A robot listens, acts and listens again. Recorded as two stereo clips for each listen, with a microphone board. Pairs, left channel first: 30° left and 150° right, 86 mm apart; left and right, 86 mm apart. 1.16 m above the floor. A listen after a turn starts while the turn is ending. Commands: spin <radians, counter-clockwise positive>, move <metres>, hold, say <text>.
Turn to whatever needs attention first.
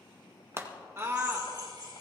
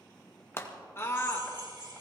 spin 2.62
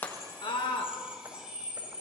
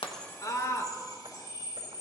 spin 0.70
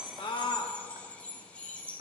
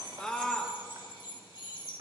spin 0.17
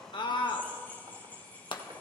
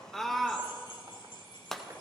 say Found it: a scream, straight ahead, 1 to 2 m away.